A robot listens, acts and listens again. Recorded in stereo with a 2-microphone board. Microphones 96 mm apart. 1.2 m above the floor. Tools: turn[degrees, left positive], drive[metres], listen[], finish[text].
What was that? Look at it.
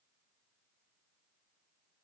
Action: listen[]
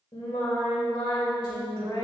Thought: The singing: about 75° left or 105° left.
Action: turn[75]
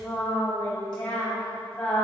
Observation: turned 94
Thought: So it is at 10° left.
Action: turn[10]
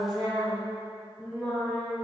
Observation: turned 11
Action: finish[Found it: singing, straight ahead, 2 to 4 m away.]